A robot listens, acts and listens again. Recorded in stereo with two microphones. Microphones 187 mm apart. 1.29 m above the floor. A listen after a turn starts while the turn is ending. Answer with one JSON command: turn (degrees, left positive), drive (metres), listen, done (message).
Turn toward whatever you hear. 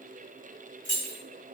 {"turn": 90}
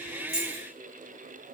{"listen": true}
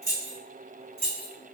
{"turn": -10}
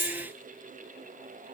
{"listen": true}
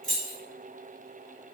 {"done": "Found it: keys jangling, straight ahead, 1 to 2 m away."}